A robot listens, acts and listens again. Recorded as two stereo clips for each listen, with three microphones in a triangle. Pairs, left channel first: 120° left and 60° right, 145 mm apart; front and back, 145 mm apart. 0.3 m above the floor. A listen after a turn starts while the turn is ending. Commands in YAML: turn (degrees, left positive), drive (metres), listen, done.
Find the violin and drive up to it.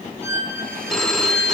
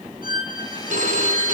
turn: 15
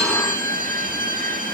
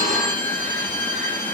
listen: true
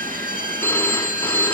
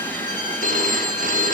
listen: true
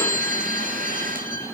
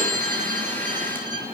done: "Facing where the violin came from. I can't hear it now. I did not reach it."